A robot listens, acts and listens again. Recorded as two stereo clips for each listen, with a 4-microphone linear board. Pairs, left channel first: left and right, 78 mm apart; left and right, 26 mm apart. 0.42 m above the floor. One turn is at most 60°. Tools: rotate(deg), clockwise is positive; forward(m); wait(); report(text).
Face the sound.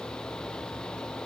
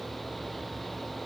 wait()
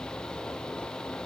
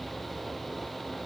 wait()
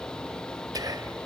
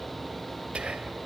rotate(60)
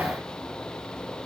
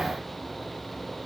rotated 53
wait()
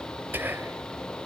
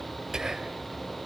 rotate(30)
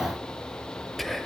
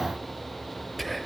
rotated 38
report("Found it: whispering, straight ahead.")